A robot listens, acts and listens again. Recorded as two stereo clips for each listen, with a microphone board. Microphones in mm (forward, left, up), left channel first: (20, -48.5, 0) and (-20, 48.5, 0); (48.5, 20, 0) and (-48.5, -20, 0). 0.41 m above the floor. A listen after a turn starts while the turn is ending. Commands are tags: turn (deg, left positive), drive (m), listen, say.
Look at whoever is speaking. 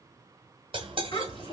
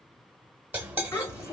<turn deg="-35"/>
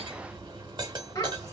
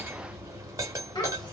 <turn deg="-20"/>
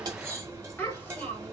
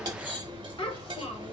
<say>Found it: a child speaking, straight ahead, 1 to 2 m away.</say>